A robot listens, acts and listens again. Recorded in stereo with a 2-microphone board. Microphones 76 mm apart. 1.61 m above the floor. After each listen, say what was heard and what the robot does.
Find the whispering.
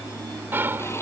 The whispering: about 30° right or 150° right. Turn 30° right.
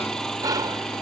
So it is at 125° right. Turn 125° right.
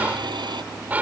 The whispering is now 20° right. Turn 20° right.
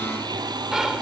Found it: whispering, straight ahead.